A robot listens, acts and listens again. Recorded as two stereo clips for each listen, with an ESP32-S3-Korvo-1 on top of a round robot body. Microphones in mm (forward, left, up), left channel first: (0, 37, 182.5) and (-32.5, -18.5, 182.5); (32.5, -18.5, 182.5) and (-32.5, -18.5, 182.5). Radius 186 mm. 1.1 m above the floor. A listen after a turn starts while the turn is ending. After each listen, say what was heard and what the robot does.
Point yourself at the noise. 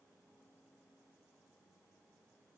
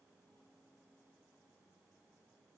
Keep listening.
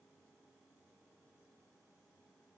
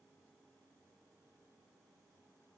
Keep listening.
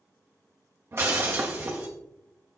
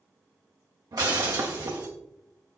The breaking glass: 165° right. Turn 165° right.
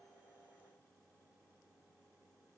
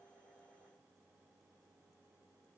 I heard breaking glass from this way, but can't make it out now.